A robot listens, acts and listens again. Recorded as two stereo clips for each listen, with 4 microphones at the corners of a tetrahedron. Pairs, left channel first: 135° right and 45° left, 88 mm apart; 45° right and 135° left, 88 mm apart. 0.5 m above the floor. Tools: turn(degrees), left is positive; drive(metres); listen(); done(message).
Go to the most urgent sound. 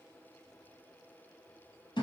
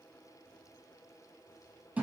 listen()
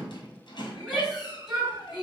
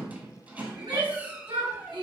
turn(degrees=130)
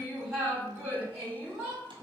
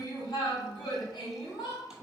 turn(degrees=-20)
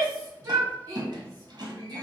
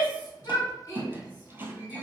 drive(metres=1.0)
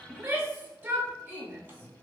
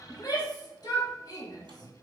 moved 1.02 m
turn(degrees=-15)
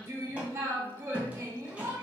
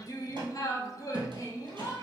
drive(metres=1.0)
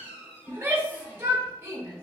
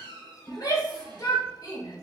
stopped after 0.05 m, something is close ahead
turn(degrees=-10)
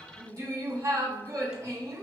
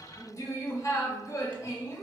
done("Arrived at the shout, straight ahead.")